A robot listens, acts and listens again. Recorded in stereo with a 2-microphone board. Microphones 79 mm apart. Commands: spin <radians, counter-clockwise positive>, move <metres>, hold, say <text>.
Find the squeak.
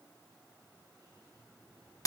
hold
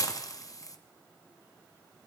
hold
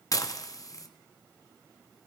say I can't make out a squeak to turn to.